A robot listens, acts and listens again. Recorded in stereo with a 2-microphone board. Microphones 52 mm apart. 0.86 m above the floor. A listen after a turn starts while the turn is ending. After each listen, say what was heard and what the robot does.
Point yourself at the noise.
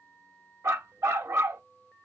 The dog barking: about 70° right or 110° right. Turn 70° right.
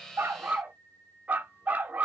So it is at 35° right. Turn 35° right.
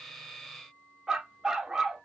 The dog barking is now 10° right. Turn 10° right.
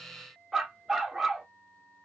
Facing the dog barking.